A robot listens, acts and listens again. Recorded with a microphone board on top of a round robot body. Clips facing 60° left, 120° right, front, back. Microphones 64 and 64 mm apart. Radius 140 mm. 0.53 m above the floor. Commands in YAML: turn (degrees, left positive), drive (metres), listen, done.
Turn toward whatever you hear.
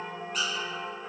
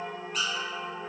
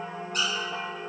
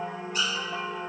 turn: -25
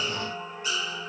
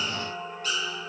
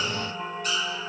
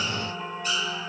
done: "Found it: a squeak, straight ahead."